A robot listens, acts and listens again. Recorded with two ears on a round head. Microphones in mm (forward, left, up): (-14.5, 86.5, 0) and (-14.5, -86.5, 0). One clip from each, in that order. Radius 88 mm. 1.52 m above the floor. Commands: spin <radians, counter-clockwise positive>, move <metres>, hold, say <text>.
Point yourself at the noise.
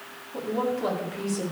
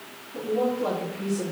spin 1.57
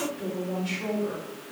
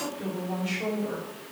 spin 0.17
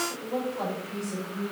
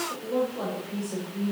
say Facing the woman speaking, over 4 m away.